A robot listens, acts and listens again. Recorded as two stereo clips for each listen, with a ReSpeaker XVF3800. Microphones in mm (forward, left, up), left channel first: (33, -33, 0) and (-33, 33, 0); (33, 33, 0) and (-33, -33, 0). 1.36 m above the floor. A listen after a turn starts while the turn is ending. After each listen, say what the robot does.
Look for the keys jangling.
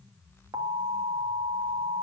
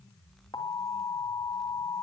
Keep listening.
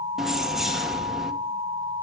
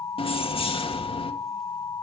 Turn 50° left.
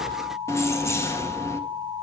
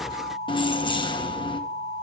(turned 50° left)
Turn 15° left.
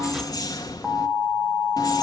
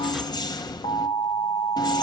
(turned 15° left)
Facing the keys jangling.